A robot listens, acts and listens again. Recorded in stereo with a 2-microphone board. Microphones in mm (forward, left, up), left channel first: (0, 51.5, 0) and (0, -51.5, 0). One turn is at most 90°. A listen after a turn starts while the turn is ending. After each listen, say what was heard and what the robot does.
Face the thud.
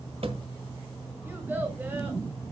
The thud: about 60° right or 120° right. Turn 60° right.
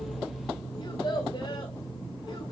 Keep listening.
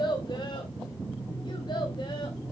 I heard a thud, but can't make it out now. It was about straight ahead or 60° right.